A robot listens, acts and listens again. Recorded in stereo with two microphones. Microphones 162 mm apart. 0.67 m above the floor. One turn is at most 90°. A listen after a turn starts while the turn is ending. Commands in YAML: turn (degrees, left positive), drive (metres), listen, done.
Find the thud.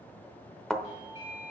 turn: 30
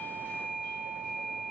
listen: true
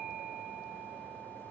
done: "I heard a thud, but can't make it out now. It was about 30° right or 150° left."